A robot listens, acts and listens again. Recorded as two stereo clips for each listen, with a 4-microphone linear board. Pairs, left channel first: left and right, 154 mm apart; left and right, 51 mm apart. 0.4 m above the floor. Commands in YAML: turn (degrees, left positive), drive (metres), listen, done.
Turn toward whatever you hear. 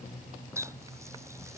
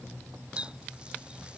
turn: -20
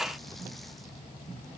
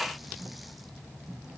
listen: true
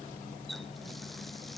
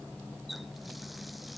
done: "Facing the running tap."